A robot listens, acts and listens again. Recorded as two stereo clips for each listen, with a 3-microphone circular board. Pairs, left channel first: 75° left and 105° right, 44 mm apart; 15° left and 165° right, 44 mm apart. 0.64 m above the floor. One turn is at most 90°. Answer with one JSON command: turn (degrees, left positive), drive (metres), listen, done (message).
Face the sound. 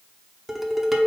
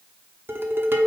{"turn": 90}
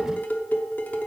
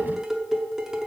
{"turn": 90}
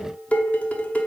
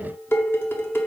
{"turn": 25}
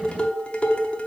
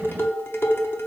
{"turn": 15}
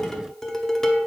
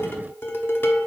{"done": "Found it: dishes clattering, straight ahead."}